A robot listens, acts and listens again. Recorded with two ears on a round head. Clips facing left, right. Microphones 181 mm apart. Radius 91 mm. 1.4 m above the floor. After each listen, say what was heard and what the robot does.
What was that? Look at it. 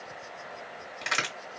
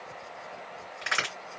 The crack: about 25° left or 155° left. Turn 25° left.
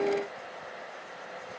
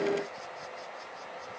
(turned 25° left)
Keep listening.
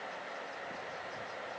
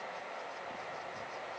I heard a crack, but can't make it out now. It was about straight ahead or 130° left.